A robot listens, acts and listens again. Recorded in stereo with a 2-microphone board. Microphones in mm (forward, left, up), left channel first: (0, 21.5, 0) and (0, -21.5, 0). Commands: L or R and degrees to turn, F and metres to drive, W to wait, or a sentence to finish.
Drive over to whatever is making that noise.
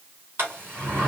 R55
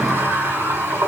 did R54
R75
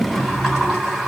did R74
F1.0
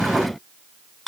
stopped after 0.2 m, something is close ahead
Blocked. The sliding door is further on, straight ahead.